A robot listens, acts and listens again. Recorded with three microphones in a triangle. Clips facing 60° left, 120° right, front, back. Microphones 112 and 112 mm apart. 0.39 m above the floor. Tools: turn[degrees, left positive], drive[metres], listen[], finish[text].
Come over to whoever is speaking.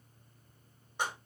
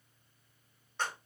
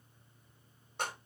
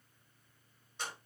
Action: listen[]
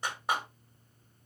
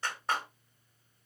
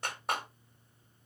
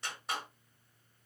Action: listen[]
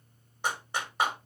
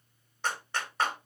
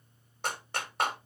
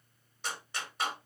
Action: finish[I can't make out anyone speaking, only a clap.]